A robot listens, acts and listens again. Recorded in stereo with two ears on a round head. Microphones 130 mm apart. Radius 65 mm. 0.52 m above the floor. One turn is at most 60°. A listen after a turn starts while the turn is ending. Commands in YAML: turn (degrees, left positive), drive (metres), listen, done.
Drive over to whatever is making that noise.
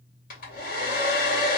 turn: 60
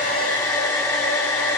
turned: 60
turn: 20
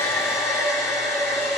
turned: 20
drive: 1.0
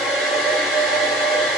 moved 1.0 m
drive: 1.0
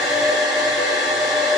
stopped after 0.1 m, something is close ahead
done: "Arrived at the hair dryer, straight ahead."